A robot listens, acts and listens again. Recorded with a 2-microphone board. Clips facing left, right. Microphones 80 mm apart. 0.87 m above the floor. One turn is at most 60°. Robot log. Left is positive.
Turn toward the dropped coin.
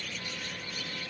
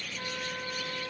cmd idle
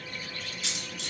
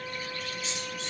note: The dropped coin: about 75° left or 105° left.
cmd yaw +60
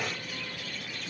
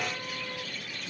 cmd idle
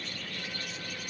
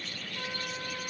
end: I heard a dropped coin, but can't make it out now. It was about 15° left or 45° left.